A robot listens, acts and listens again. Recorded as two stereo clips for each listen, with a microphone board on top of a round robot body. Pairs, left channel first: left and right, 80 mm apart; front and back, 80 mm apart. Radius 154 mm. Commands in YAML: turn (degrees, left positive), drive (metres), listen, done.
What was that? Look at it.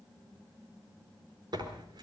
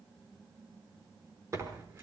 turn: -125
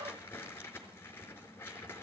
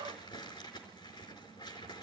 turn: 25
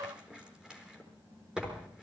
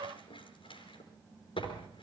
turn: -10
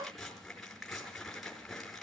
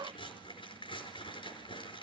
done: "Facing the tearing paper."